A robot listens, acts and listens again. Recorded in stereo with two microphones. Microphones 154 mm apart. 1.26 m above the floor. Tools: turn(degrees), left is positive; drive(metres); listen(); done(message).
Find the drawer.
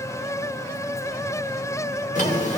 turn(degrees=60)
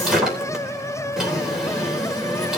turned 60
done("Found it: a drawer, straight ahead, 2 to 4 m away.")